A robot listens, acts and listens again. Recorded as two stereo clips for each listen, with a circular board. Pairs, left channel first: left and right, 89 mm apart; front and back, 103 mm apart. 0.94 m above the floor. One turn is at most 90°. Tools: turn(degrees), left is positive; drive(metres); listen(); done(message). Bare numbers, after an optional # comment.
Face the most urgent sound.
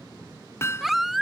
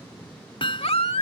done("Found it: a baby crying, straight ahead.")